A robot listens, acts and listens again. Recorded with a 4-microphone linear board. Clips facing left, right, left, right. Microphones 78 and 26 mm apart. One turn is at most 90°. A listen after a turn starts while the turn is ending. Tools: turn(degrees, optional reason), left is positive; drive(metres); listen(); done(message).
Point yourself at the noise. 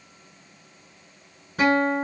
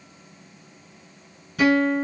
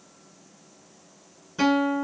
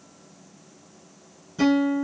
turn(degrees=35, reason="The guitar: about 35° left or 145° left.")
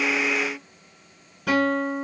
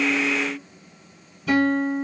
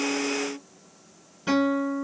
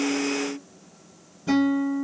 turn(degrees=90, reason="So it is at 110° left.")
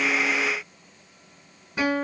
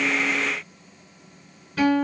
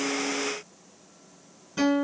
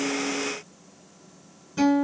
turn(degrees=20, reason="The guitar is now 20° left.")
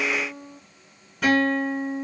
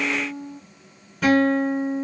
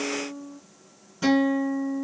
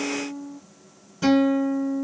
done("Found it: a guitar, straight ahead, 1 to 2 m away.")